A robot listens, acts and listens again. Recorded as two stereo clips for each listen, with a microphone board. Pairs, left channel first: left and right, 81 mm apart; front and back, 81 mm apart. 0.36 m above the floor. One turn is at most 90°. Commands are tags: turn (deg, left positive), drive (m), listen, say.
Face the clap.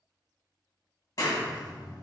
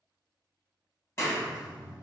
<turn deg="50"/>
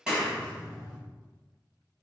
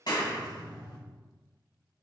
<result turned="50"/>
<turn deg="-15"/>
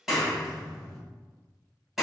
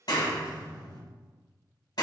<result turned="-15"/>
<say>Facing the clap, 1 to 2 m away.</say>